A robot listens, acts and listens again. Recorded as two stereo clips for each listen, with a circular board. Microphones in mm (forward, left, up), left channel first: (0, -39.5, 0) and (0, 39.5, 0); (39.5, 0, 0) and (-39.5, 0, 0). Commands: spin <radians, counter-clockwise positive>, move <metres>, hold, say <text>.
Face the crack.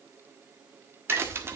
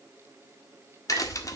spin 0.61
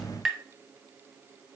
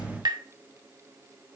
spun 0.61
say Facing where the crack came from. I can't hear it now.